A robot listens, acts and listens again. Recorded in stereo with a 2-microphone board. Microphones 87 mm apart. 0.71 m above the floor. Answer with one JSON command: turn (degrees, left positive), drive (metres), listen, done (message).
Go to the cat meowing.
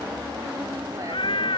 {"turn": 90}
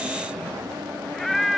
{"drive": 1.0}
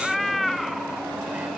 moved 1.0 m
{"drive": 1.0}
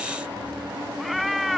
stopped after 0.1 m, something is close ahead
{"done": "I am next to the cat meowing."}